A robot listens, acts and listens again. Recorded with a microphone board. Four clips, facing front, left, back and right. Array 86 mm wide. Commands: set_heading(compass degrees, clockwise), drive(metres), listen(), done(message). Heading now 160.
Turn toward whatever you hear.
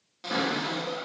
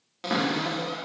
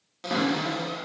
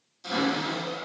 set_heading(60)
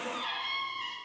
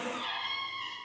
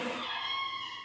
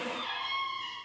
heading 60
set_heading(35)
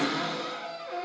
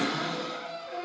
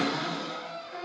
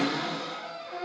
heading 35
set_heading(50)
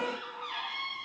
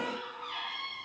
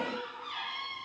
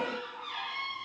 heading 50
done("Facing the cupboard door, under 1 m away.")